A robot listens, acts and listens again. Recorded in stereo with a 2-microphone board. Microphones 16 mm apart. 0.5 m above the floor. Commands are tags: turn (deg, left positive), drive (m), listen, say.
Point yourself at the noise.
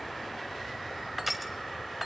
<turn deg="-30"/>
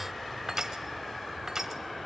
<turn deg="-140"/>
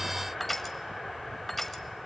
<turn deg="15"/>
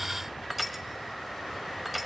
<say>Found it: crushing, straight ahead.</say>